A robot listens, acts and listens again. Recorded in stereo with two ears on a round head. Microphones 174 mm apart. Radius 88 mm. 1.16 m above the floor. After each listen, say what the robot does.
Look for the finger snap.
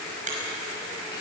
Turn 40° right.
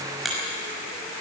Found it: a finger snap, straight ahead, over 4 m away.